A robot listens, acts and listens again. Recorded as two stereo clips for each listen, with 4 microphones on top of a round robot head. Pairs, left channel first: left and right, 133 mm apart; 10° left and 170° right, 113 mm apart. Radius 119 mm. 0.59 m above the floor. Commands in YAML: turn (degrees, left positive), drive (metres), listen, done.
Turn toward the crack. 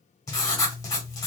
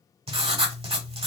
listen: true
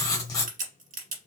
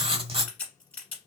turn: -70
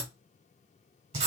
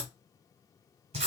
done: "Facing where the crack came from. I can't hear it now."